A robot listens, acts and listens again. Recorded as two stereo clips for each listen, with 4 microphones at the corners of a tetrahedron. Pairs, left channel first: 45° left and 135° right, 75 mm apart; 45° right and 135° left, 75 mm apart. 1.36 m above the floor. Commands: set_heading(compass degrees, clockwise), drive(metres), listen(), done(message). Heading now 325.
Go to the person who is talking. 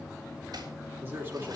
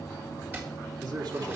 set_heading(160)
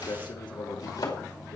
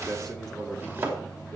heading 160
set_heading(120)
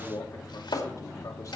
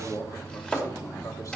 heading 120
drive(1.0)
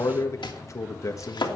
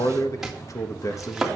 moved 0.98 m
drive(1.0)
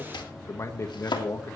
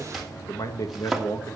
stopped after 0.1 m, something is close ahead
done("I am next to the man speaking.")